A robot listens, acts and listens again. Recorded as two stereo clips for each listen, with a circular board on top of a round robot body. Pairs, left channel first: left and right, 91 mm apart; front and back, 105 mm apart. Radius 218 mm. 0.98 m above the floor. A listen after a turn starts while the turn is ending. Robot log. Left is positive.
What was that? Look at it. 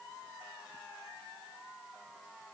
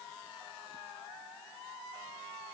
cmd idle
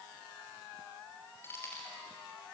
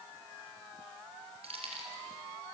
note: The keys jangling: 150° left.
cmd yaw +150
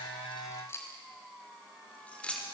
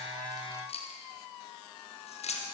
note: The keys jangling is now 10° left.
cmd yaw +10
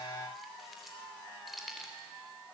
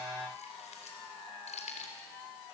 end: Facing the keys jangling.